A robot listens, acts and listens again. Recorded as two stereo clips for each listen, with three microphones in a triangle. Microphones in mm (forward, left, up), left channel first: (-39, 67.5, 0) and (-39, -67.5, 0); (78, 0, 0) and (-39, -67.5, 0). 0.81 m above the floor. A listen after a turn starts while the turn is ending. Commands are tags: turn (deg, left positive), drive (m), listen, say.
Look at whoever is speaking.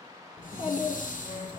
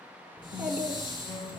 <turn deg="130"/>
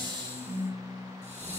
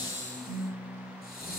<listen/>
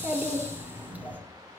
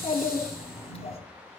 <turn deg="-15"/>
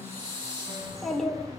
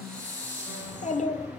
<say>Found it: a child speaking, straight ahead.</say>